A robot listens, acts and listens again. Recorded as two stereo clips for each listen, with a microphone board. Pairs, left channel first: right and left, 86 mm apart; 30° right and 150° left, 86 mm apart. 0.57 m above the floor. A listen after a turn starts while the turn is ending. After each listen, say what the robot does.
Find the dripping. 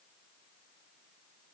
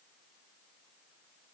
Keep listening.
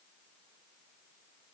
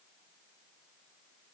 Keep listening.
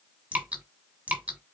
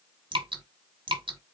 Turn 165° left.
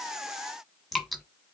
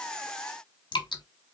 Found it: dripping, straight ahead, 1 to 2 m away.